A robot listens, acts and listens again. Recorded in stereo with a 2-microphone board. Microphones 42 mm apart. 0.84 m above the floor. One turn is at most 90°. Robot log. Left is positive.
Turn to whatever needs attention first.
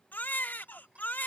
note: The baby crying: about 45° left or 135° left.
cmd yaw +45
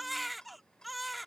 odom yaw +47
end: Facing the baby crying.